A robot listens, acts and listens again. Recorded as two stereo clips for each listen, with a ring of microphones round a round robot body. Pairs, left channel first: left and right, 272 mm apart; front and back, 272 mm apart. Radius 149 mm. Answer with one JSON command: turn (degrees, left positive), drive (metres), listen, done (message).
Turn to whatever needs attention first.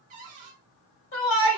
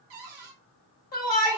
{"turn": 55}
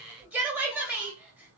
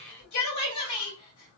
{"done": "Facing the shout, 2 to 4 m away."}